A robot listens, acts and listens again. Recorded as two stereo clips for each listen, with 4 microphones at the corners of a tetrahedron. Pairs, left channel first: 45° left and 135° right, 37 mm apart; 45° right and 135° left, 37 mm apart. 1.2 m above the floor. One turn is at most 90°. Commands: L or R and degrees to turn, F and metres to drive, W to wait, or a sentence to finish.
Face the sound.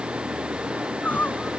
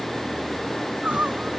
L85
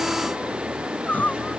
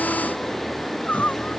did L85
Found it: crying, straight ahead.